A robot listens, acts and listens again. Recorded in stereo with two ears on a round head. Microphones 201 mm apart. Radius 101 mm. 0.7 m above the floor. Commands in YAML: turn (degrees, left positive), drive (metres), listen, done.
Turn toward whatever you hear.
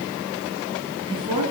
turn: -25
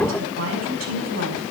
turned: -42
turn: -110
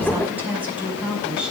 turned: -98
done: "Facing the woman speaking."